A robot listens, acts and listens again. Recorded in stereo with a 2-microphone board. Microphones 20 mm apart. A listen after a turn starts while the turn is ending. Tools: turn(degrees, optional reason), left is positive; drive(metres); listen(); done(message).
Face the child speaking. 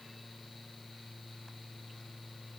listen()
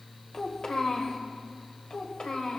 turn(degrees=55, reason="The child speaking: about 55° left or 125° left.")
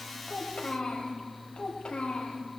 turn(degrees=50, reason="So it is at 50° left.")
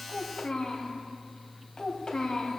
turn(degrees=25, reason="The child speaking is now 25° left.")
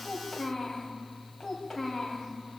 done("Found it: a child speaking, straight ahead, 2 to 4 m away.")